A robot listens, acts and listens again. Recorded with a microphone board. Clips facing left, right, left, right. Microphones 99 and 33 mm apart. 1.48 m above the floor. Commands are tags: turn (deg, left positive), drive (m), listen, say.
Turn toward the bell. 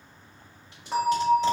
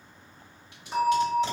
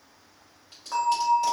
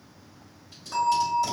<turn deg="65"/>
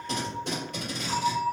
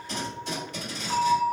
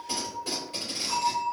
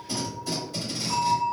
<turn deg="35"/>
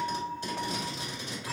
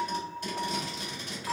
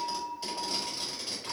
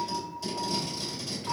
<turn deg="-15"/>
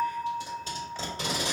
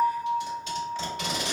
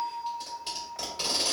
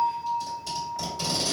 <say>Facing the bell.</say>